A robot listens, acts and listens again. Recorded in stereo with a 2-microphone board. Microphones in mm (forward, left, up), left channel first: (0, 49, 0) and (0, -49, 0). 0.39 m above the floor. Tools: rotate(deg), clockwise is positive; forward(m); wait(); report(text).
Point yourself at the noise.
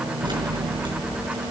rotate(50)
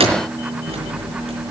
rotate(80)
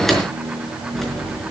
report("Found it: keys jangling, straight ahead.")